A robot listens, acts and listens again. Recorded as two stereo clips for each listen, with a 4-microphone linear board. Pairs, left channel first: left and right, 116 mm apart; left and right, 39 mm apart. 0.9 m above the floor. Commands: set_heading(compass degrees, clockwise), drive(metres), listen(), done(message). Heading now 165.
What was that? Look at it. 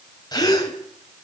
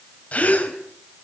set_heading(130)
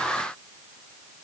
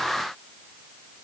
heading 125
listen()
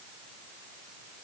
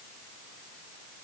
done("I heard a gasp, but can't make it out now. It was about 5° right or 105° left.")